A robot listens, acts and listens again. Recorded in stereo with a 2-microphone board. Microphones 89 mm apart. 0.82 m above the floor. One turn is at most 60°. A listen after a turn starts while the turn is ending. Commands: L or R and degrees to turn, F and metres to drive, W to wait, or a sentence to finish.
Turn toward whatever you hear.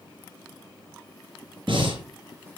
R60
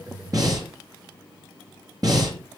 R45
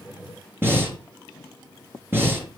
R25
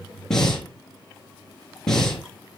Facing the breathing.